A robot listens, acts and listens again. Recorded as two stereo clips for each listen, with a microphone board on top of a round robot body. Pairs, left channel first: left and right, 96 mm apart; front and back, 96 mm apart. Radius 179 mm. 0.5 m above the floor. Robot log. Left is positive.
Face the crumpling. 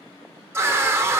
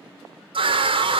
cmd idle
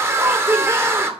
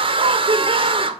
cmd idle
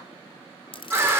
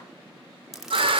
note: The crumpling: 95° left.
cmd yaw +95
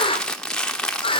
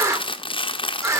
note: The crumpling is now 10° left.
cmd yaw +10
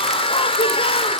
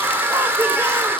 cmd idle
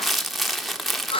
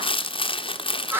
end: Facing the crumpling.